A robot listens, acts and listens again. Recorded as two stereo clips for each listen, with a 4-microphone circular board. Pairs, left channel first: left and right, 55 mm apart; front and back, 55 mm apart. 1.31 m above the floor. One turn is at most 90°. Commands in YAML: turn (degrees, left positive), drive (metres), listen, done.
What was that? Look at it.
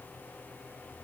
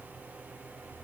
listen: true
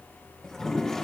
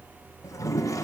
turn: 10
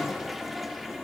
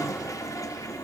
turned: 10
done: "Found it: a toilet flushing, straight ahead."